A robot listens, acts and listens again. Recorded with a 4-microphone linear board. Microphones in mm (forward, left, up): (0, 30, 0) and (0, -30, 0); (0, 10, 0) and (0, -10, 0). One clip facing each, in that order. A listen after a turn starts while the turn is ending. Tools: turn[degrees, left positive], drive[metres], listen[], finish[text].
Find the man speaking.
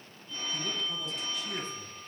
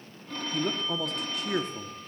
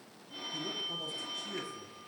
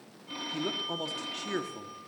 Thought: The man speaking: about 60° right or 120° right.
Action: turn[-60]
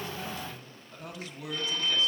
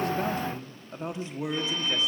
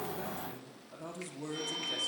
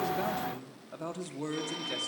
Thought: So it is at 25° right.
Action: turn[-25]
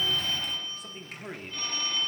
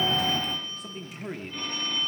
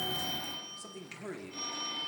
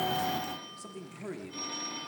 Action: finish[Facing the man speaking, 1 to 2 m away.]